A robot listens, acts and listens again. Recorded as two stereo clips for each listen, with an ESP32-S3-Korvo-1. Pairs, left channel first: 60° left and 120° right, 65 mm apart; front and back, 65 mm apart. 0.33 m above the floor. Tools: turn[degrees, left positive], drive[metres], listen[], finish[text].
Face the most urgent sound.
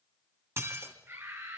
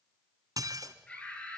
Thought: The scream: 70° right.
Action: turn[-70]
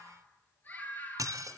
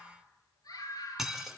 Action: finish[Found it: a scream, straight ahead.]